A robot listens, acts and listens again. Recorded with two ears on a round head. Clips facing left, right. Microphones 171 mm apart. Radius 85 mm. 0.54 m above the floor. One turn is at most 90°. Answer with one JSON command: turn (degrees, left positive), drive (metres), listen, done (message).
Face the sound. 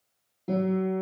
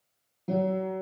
{"turn": 30}
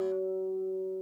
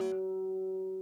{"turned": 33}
{"turn": -25}
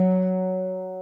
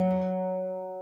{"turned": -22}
{"done": "Facing the guitar."}